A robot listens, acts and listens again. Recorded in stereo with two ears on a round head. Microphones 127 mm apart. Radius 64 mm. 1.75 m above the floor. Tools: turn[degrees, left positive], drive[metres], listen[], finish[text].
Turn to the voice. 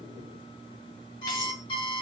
Action: listen[]
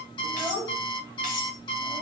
Thought: The child speaking: about 25° right or 155° right.
Action: turn[-25]
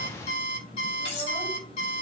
Action: listen[]
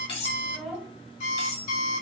Action: finish[Facing the child speaking.]